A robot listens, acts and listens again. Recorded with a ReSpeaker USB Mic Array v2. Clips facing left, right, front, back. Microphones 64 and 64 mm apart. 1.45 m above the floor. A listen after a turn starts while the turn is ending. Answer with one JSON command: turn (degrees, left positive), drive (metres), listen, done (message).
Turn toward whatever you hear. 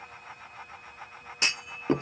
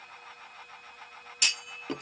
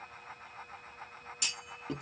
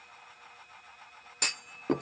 {"turn": 150}
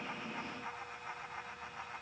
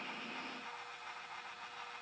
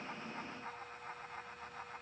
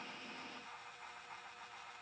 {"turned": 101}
{"turn": 45}
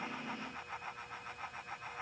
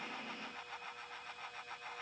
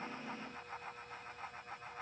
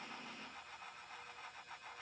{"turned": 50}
{"done": "I heard a clunk from this way, but can't make it out now."}